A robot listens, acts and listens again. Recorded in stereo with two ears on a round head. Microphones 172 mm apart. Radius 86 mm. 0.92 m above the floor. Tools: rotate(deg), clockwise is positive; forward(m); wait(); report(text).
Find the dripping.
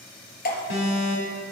rotate(-50)
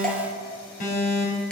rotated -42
report("Found it: dripping, straight ahead.")